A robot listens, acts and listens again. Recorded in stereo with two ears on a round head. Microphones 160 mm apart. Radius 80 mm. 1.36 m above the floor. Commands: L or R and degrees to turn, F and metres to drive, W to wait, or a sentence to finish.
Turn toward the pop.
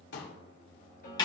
L70
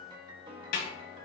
W
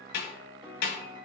I heard a pop, but can't make it out now. It was about straight ahead or 40° left.